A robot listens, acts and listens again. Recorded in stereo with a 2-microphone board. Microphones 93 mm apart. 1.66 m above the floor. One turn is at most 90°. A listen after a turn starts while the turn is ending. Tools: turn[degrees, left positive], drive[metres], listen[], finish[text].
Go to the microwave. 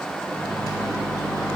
Thought: The microwave: about 40° left or 140° left.
Action: turn[40]
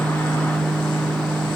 Thought: So it is at 100° left.
Action: turn[90]
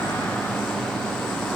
Thought: The microwave is now 15° left.
Action: turn[15]
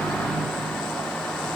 Action: drive[1.0]
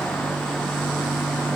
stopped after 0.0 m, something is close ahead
Action: finish[Blocked. The microwave is further on, straight ahead.]